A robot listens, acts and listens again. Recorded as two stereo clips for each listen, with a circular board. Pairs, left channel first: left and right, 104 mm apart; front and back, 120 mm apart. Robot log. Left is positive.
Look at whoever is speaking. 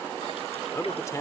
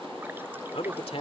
note: The man speaking: 35° left.
cmd yaw +35
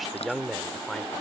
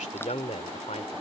end: Found it: a man speaking, straight ahead.